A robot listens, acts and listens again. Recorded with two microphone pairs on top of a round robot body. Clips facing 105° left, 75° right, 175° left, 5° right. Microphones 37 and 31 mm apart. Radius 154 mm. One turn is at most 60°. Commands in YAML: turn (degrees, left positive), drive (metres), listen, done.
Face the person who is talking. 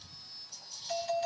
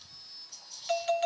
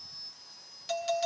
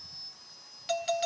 listen: true
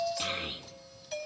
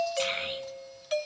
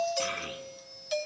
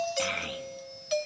done: "Facing the child speaking."